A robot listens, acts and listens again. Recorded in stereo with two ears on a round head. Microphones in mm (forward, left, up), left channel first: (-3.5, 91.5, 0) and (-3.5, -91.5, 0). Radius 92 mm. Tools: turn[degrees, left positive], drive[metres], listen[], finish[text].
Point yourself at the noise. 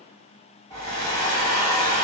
Thought: The hair dryer: about 20° left or 160° left.
Action: turn[20]
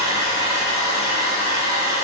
Thought: So it is at 140° left.
Action: turn[140]
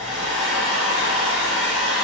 Action: finish[Found it: a hair dryer, straight ahead, 1 to 2 m away.]